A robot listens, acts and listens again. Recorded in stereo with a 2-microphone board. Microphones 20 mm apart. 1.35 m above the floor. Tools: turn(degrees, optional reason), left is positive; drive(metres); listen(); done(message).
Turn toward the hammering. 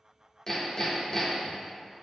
turn(degrees=30, reason="The hammering: about 30° left or 150° left.")
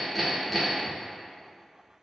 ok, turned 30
done("Found it: hammering, straight ahead, 1 to 2 m away.")